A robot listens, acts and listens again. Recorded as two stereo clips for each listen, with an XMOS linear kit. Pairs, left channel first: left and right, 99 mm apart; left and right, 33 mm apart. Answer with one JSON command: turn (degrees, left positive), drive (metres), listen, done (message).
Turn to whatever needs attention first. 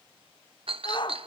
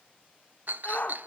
{"turn": 50}
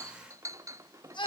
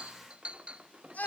{"turn": 65}
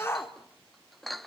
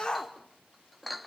{"turn": 30}
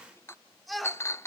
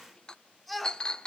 {"done": "Facing the shout."}